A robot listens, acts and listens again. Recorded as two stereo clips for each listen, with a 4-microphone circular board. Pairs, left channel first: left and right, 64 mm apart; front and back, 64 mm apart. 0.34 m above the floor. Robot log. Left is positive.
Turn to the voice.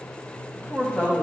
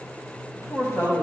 note: The woman speaking: 30° left.
cmd yaw +30
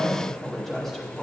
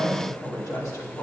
end: Facing the woman speaking.